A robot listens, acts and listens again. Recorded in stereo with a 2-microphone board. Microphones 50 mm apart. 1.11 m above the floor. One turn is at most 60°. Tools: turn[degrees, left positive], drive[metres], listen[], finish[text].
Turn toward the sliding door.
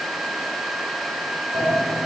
Action: turn[-60]
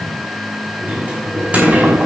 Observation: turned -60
Thought: So it is at 25° right.
Action: turn[-25]
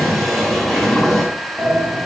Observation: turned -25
Thought: The sliding door is now 15° left.
Action: turn[15]
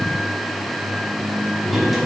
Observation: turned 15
Action: finish[Facing the sliding door.]